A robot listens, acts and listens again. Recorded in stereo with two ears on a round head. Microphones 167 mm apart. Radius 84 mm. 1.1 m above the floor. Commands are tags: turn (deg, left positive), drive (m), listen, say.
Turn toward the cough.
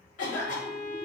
<turn deg="40"/>
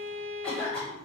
<say>Found it: a cough, straight ahead.</say>